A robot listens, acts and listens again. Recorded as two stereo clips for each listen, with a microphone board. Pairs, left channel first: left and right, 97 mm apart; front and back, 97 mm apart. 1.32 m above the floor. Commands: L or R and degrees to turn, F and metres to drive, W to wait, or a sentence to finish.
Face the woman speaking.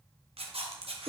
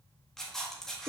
W
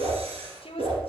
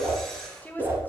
L70
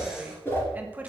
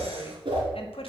R15
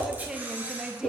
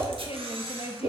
Found it: a woman speaking, straight ahead.